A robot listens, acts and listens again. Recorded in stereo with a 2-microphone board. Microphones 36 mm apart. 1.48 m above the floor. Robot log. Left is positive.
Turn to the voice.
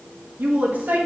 note: The woman speaking: about 60° right or 120° right.
cmd yaw -60
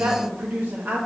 note: So it is at 60° right.
cmd yaw -60
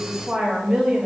note: The woman speaking is now 20° right.
cmd yaw -20
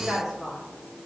end: Found it: a woman speaking, straight ahead, 1 to 2 m away.